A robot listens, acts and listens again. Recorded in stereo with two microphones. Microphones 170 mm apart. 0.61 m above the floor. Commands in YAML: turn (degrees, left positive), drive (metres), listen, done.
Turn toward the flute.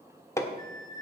turn: 25
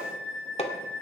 done: "Found it: a flute, straight ahead, 2 to 4 m away."